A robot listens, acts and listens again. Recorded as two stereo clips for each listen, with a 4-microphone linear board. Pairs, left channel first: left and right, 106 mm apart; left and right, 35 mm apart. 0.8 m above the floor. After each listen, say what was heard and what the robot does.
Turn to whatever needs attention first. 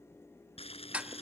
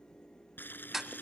Keep listening.
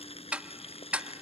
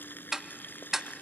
Keep listening.
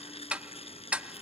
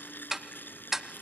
I can't make out anything urgent to turn to.